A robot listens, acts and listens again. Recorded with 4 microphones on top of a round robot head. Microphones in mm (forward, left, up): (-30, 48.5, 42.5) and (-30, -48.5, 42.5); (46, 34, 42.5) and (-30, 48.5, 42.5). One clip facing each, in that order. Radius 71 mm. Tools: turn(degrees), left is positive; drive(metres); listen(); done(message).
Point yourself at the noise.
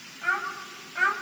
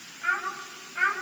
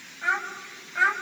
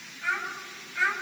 turn(degrees=25)
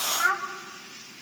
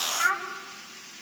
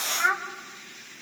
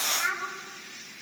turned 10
turn(degrees=15)
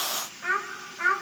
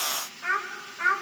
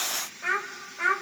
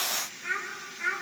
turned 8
done("Facing the child speaking.")